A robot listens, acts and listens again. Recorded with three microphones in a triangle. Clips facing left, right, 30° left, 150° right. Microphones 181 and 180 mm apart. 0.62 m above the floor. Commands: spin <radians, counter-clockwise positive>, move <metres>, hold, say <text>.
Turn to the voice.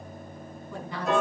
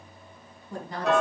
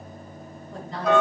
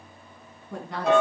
spin -2.36
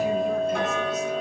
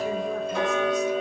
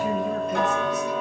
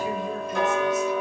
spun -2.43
hold
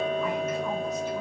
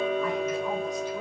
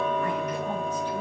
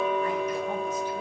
hold
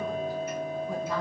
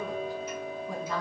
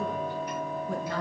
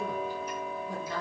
say Found it: a woman speaking, straight ahead, over 4 m away.